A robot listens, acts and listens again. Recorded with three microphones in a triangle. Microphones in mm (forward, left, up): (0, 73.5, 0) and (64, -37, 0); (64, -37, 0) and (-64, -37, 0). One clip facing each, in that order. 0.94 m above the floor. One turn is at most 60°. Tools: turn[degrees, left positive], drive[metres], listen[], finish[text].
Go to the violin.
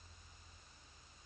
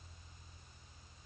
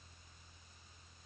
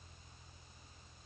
Action: listen[]
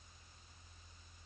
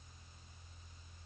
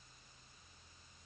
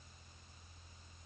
Action: listen[]
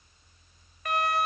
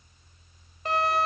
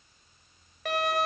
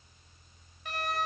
Action: drive[1.0]
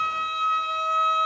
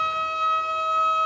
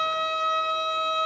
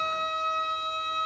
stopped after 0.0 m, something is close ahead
Action: finish[Blocked. The violin is further on, straight ahead.]